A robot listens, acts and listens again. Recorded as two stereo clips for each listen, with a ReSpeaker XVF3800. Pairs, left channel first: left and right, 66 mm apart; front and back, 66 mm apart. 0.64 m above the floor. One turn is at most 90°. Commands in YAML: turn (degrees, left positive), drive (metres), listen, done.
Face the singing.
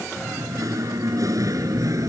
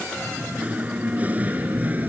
turn: -90
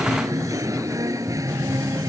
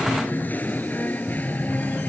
turn: -65
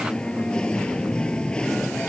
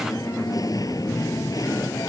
turn: 15
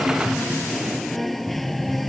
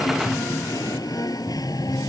done: "Found it: singing, straight ahead."